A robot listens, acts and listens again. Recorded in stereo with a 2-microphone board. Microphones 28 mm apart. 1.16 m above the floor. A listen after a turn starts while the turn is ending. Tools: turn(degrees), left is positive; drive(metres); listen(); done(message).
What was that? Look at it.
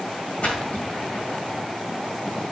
turn(degrees=60)
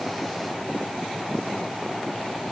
listen()
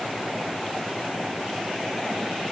done("I heard a splash, but can't make it out now. It was about straight ahead or 60° left.")